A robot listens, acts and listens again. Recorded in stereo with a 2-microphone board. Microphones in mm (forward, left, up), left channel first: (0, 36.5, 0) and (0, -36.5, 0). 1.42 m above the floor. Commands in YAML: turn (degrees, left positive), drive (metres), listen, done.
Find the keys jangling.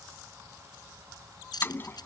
turn: 65
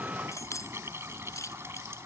turn: 45
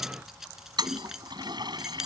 done: "Facing the keys jangling."